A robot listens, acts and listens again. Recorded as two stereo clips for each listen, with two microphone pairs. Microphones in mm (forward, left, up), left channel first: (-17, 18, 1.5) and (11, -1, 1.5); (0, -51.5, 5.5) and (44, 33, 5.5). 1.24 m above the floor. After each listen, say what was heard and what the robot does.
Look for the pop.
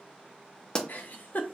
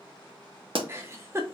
The pop: 80° left. Turn 80° left.
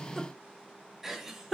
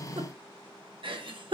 I heard a pop from this way, but can't make it out now.